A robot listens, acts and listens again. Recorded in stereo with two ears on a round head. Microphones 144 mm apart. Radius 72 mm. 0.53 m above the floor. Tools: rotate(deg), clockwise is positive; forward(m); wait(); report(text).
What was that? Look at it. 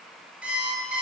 rotate(30)
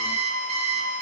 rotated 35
rotate(140)
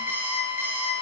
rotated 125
rotate(15)
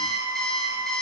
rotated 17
report("Found it: an alarm clock, straight ahead.")